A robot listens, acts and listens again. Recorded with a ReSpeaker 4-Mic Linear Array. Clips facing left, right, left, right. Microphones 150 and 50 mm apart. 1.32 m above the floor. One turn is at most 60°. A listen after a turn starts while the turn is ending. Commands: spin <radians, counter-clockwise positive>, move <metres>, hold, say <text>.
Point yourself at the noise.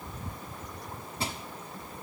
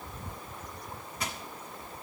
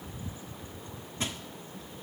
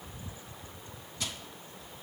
spin 0.52
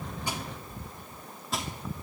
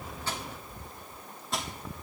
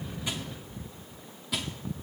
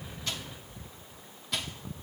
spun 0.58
say Facing the crushing.